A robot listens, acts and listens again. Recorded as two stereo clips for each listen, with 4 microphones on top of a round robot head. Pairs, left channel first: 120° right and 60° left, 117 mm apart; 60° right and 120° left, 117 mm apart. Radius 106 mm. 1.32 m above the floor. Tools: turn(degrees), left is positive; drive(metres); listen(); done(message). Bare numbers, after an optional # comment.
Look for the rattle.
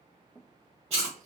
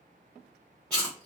listen()
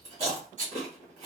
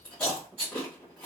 # The rattle: 75° left.
turn(75)
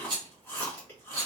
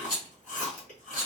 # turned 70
done("Facing the rattle, 1 to 2 m away.")